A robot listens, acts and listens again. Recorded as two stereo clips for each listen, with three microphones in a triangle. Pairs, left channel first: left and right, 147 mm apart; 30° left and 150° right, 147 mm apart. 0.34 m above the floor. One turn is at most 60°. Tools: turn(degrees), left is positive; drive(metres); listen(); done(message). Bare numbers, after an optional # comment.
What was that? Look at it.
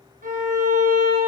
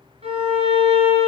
# The violin: 105° right.
turn(-60)
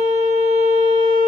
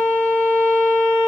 # The violin is now 50° right.
turn(-50)
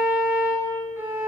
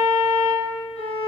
# The violin is now 15° right.
turn(-15)
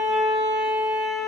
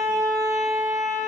done("Facing the violin, 1 to 2 m away.")